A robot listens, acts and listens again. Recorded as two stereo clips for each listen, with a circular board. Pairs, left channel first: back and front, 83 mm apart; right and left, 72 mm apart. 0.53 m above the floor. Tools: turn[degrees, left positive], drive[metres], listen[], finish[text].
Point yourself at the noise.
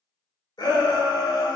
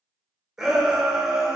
Thought: The shout: 170° left.
Action: turn[170]
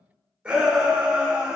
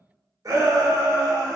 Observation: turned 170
Thought: The shout is now 75° left.
Action: turn[75]
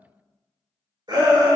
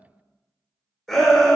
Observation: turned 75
Action: finish[Found it: a shout, straight ahead, 1 to 2 m away.]